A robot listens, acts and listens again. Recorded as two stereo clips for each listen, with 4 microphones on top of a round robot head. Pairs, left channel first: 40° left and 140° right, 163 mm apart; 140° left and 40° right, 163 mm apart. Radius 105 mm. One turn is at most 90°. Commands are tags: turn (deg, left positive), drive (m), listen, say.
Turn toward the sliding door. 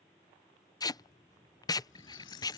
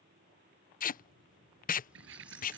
<turn deg="-30"/>
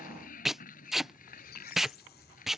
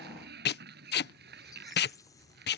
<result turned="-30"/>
<say>Found it: a sliding door, straight ahead.</say>